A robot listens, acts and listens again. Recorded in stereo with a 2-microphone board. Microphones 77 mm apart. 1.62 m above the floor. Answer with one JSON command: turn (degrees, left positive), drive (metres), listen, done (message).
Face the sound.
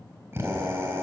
{"turn": -35}
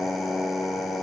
{"done": "Facing the drill, 2 to 4 m away."}